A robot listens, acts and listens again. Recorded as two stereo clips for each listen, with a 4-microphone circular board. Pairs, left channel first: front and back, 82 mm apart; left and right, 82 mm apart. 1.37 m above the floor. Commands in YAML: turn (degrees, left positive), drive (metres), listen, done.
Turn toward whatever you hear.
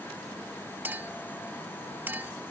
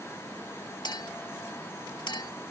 turn: 115
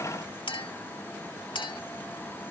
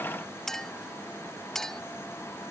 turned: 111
done: "Facing the clink."